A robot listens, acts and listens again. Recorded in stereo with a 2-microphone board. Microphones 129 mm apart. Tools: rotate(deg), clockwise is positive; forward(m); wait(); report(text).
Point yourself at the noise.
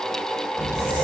rotate(-30)
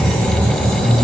rotate(30)
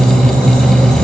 report("Facing the squeak, 1 to 2 m away.")